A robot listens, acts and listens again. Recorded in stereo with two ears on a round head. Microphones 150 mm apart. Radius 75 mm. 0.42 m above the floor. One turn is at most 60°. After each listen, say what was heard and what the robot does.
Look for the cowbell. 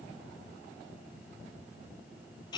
Keep listening.
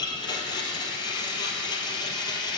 Keep listening.
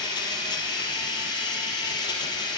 I can't make out a cowbell to turn to.